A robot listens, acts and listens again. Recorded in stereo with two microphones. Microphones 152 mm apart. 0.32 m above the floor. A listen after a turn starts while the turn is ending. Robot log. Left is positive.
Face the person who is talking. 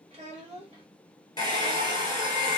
note: The child speaking: about 45° right or 135° right.
cmd yaw -45
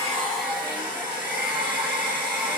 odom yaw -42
cmd idle
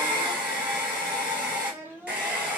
note: So it is at 15° right.
cmd yaw -15
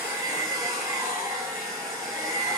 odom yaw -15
cmd idle
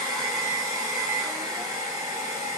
cmd idle
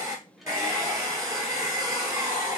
end: I heard a child speaking from this way, but can't make it out now.